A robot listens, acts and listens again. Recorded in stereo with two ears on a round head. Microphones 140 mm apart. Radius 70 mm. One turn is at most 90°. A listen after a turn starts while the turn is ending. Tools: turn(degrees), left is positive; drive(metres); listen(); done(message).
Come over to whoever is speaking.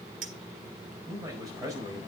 turn(degrees=-25)
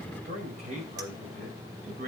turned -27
turn(degrees=-90)
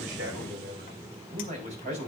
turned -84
turn(degrees=-45)
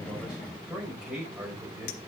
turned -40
drive(metres=1.0)
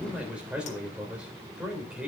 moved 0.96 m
drive(metres=1.0)
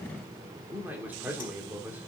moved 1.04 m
turn(degrees=-10)
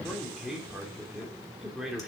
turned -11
drive(metres=1.0)
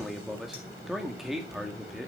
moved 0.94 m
drive(metres=1.0)
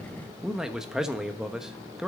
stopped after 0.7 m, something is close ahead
done("I am next to the man speaking.")